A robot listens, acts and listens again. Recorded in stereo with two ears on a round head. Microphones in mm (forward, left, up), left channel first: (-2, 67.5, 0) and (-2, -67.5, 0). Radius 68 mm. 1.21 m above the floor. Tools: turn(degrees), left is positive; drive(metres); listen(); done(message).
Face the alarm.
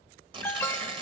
turn(degrees=15)
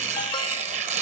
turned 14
listen()
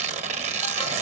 listen()
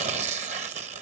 done("I heard an alarm, but can't make it out now. It was about 5° left or 150° left.")